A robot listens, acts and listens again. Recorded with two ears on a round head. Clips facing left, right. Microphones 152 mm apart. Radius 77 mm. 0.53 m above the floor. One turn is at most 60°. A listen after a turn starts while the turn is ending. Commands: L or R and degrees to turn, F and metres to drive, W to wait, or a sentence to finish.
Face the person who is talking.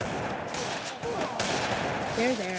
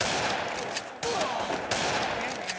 L60
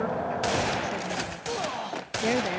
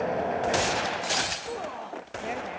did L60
L60
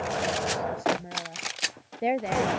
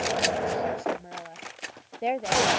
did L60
L10
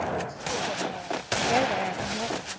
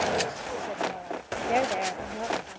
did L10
W
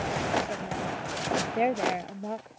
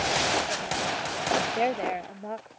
Facing the woman speaking.